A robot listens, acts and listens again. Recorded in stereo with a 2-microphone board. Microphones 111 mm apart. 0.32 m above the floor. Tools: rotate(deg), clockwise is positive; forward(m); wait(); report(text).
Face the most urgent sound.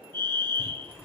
rotate(-25)
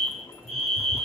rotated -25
report("Found it: a fire alarm, straight ahead.")